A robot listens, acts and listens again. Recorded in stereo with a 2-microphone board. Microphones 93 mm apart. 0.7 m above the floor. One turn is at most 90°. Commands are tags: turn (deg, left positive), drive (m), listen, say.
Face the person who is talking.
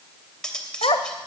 <turn deg="90"/>
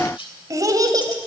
<turn deg="-45"/>
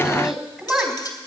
<turn deg="-10"/>
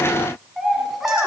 <say>Facing the child speaking.</say>